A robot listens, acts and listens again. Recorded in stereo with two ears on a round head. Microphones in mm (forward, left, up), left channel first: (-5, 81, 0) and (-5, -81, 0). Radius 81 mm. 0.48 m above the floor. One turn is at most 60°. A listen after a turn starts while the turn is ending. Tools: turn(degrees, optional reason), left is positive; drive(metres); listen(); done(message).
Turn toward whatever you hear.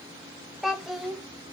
turn(degrees=30)
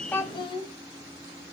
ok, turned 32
turn(degrees=60, reason="So it is at 150° left.")
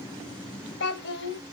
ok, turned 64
turn(degrees=60, reason="The child speaking is now 85° left.")
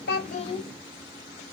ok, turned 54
turn(degrees=30, reason="The child speaking is now 30° left.")
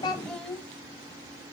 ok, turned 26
done("Found it: a child speaking, straight ahead.")